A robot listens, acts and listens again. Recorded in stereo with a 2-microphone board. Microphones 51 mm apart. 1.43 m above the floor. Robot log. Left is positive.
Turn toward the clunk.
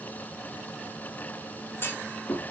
note: The clunk: about 45° left or 135° left.
cmd yaw +45
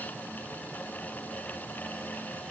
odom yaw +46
cmd idle
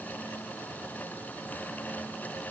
end: I heard a clunk, but can't make it out now. It was about straight ahead or 90° left.